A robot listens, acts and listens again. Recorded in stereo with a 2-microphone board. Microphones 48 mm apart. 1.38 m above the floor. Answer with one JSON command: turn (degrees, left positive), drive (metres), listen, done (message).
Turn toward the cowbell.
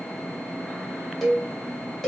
{"turn": 30}
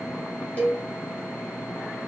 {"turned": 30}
{"turn": 145}
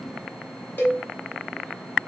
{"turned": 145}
{"turn": 50}
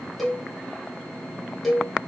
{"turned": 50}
{"done": "Found it: a cowbell, straight ahead."}